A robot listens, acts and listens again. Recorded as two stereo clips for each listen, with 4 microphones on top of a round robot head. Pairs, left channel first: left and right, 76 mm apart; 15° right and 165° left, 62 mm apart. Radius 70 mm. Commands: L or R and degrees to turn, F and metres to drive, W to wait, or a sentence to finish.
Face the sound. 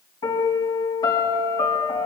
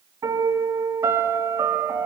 L120
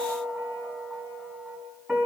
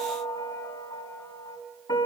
R10
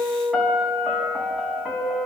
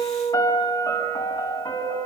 Found it: a piano, straight ahead, over 4 m away.